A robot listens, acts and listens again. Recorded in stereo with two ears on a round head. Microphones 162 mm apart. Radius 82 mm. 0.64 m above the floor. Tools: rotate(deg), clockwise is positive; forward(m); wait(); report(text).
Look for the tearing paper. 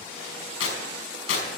rotate(-90)
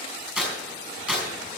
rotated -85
report("Found it: tearing paper, straight ahead.")